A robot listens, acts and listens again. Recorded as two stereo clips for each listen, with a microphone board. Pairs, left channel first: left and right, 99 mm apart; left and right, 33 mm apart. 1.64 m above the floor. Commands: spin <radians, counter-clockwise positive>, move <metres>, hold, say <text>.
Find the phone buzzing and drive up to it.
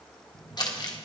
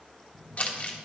spin -1.13
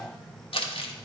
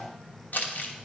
spin -0.17
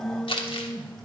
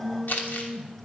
move 1.0
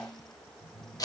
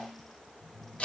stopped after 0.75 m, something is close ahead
say Something is in my way. I am facing the phone buzzing but have not reached it.